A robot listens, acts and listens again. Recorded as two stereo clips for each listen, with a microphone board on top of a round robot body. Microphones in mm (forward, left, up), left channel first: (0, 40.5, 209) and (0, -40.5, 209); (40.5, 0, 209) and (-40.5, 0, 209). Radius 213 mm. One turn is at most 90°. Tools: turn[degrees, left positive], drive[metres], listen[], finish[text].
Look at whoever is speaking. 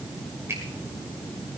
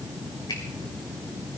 Action: listen[]
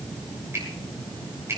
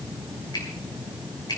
Action: listen[]
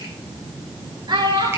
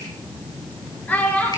Thought: The child speaking: 70° right.
Action: turn[-70]
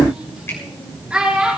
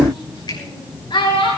Thought: The child speaking is now 10° right.
Action: turn[-10]
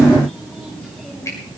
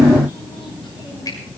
Action: listen[]
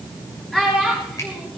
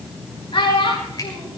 Action: finish[Found it: a child speaking, straight ahead, over 4 m away.]